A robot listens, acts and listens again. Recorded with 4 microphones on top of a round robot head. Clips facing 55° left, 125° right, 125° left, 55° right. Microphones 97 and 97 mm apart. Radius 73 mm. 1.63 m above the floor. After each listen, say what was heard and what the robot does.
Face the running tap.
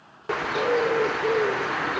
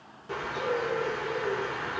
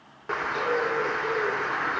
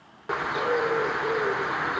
Keep listening.
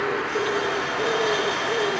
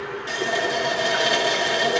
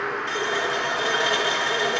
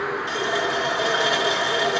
The running tap: 130° right. Turn 130° right.
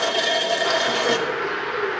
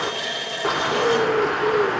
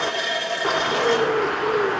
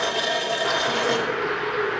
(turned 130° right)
The running tap is now 25° left. Turn 25° left.
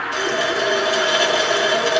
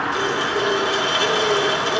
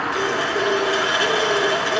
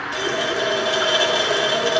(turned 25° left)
The running tap is now 15° left. Turn 15° left.
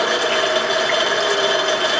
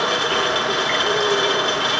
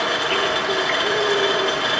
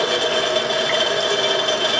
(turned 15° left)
Found it: a running tap, straight ahead.